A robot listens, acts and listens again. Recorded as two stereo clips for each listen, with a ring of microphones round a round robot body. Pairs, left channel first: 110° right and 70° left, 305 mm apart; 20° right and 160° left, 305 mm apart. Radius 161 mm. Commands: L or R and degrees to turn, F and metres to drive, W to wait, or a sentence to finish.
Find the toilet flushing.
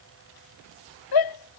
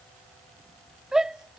W
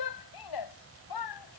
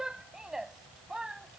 W
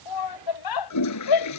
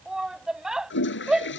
R75
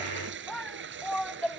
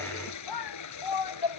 L10
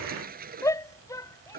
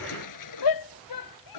Found it: a toilet flushing, straight ahead.